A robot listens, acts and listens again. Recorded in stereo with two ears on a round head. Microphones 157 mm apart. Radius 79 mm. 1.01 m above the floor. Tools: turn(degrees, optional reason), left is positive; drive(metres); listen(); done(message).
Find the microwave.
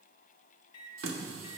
turn(degrees=30, reason="The microwave: about 30° left or 150° left.")
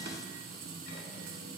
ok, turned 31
listen()
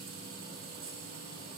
listen()
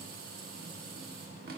done("I heard a microwave, but can't make it out now. It was about 5° right or 120° left.")